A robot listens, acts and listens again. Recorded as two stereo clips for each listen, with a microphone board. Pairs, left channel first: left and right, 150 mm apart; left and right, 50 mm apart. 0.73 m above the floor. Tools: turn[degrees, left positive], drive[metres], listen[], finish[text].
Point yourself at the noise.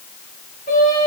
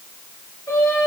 Action: turn[90]
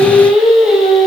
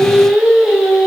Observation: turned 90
Action: finish[Found it: singing, straight ahead.]